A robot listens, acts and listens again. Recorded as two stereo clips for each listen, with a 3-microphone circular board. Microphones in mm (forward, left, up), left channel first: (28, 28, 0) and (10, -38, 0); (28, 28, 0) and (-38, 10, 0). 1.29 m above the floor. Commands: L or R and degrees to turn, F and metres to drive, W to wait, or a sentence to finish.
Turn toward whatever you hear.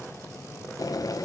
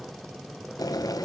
L45
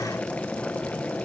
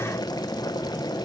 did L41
Found it: boiling, straight ahead.